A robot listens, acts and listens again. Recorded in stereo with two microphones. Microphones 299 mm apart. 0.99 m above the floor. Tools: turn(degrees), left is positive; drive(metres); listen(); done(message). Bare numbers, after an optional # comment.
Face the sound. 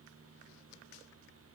listen()
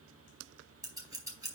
turn(-30)
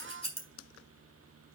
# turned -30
# So it is at 20° left.
turn(20)
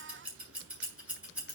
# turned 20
done("Facing the scissors.")